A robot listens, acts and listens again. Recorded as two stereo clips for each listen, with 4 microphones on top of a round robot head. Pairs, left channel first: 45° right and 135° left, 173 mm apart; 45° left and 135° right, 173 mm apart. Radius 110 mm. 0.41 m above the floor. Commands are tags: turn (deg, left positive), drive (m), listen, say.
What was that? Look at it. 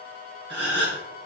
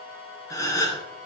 <turn deg="115"/>
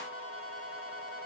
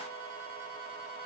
<say>I heard a gasp from this way, but can't make it out now.</say>